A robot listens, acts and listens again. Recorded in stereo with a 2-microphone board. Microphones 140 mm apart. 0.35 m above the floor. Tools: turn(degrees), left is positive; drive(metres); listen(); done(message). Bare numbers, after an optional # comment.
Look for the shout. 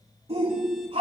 # The shout: about 45° right or 135° right.
turn(-45)
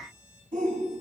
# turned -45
# So it is at 80° right.
turn(-80)
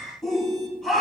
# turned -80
done("Found it: a shout, straight ahead.")